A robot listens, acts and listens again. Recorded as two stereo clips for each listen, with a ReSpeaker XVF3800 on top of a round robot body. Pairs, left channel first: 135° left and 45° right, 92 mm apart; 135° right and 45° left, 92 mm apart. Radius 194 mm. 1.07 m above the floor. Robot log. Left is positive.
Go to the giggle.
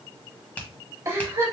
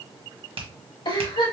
note: The giggle: 105° right.
cmd yaw -105
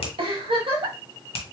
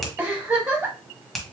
note: The giggle is now 30° right.
cmd yaw -30
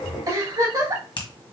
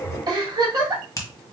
cmd fwd 1.0
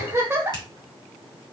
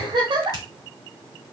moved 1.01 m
note: The giggle is now 15° left.
cmd yaw +15
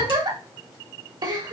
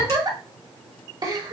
cmd fwd 1.0
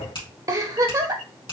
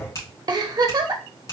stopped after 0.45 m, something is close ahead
end: I am next to the giggle.